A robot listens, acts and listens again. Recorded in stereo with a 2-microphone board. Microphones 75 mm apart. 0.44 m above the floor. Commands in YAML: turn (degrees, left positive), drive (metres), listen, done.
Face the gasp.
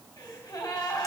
turn: 60
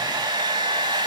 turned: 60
listen: true
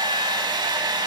done: "I heard a gasp, but can't make it out now. It was about straight ahead or 60° left."